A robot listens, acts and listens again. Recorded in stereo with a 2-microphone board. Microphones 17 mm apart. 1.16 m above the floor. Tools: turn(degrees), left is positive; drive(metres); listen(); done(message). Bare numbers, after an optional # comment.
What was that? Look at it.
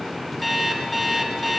turn(30)
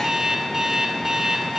# So it is at 30° right.
turn(-30)
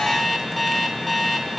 done("Found it: an alarm clock, straight ahead.")